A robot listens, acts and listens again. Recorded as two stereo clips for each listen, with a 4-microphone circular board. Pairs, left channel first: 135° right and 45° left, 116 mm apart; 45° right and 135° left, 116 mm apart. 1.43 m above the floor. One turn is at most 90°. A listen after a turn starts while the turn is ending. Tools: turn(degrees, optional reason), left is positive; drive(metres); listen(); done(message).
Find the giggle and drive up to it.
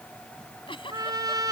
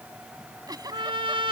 turn(degrees=-90, reason="The giggle: 170° right.")
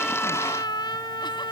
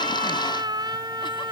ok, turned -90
turn(degrees=-80, reason="Nothing new. It was at 80° right.")
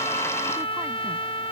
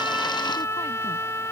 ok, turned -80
listen()
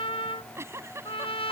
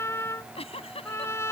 turn(degrees=-20, reason="The giggle is now 20° right.")
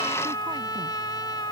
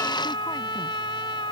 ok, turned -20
listen()
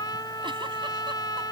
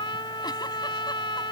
listen()
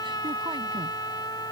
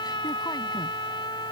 done("Facing where the giggle came from. I can't hear it now. I did not reach it.")